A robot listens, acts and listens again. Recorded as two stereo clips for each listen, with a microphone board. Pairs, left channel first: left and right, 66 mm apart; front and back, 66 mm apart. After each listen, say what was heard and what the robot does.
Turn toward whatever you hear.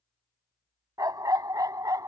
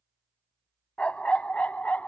The dog barking: 65° right. Turn 65° right.
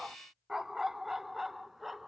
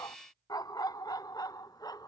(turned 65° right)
Facing the dog barking.